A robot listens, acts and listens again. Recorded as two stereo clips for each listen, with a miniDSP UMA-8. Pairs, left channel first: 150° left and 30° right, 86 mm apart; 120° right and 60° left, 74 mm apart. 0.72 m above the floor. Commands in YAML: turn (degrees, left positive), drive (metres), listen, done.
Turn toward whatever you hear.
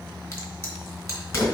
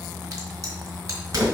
turn: 95
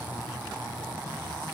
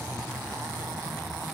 done: "I heard a crack from this way, but can't make it out now."